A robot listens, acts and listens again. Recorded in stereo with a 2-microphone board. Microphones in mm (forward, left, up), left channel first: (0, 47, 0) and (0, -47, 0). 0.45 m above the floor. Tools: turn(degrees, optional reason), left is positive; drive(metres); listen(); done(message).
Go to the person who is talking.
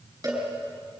listen()
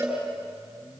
listen()
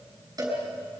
done("I can't make out anyone speaking, only a cowbell.")